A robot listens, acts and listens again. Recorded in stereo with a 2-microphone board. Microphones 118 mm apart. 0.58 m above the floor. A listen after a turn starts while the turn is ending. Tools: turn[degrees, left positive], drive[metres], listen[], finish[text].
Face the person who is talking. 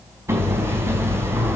Action: listen[]
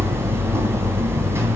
Action: listen[]
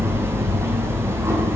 Action: finish[I can't make out anyone speaking, only hammering.]